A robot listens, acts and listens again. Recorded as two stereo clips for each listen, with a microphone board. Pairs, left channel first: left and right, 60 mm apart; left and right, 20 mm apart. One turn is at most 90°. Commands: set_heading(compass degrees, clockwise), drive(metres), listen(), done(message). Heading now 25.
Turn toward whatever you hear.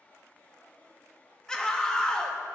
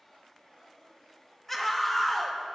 set_heading(355)
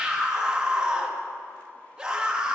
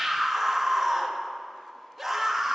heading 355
set_heading(10)
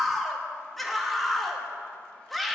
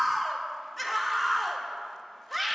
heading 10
done("Facing the scream.")